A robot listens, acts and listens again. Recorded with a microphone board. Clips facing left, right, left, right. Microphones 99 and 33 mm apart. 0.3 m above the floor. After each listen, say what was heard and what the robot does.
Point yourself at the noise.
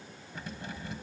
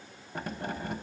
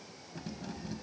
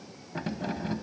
The keys jangling: about 55° right or 125° right. Turn 55° right.
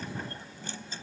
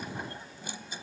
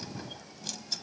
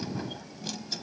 So it is at 15° right. Turn 15° right.
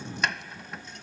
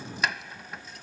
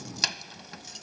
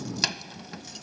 Found it: keys jangling, straight ahead.